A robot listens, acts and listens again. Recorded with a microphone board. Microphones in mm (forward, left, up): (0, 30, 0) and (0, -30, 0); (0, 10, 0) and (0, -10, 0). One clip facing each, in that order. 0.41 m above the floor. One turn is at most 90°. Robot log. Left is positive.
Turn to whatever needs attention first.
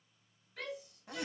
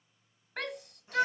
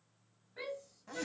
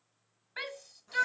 note: The shout: about 55° right or 125° right.
cmd yaw -55
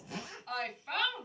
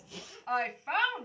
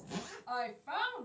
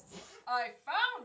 note: So it is at 35° right.
cmd yaw -35
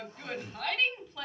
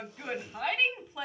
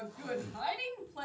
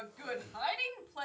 note: The shout is now 20° right.
cmd yaw -20
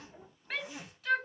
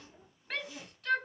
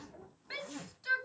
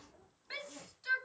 end: Facing the shout.